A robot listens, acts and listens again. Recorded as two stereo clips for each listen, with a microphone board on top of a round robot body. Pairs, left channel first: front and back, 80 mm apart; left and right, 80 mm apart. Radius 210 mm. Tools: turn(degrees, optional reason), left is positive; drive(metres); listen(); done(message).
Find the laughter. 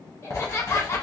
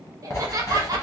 turn(degrees=-50, reason="The laughter: 50° right.")
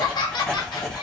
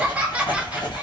turn(degrees=-15, reason="The laughter is now 15° right.")
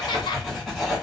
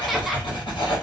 done("Facing the laughter, 1 to 2 m away.")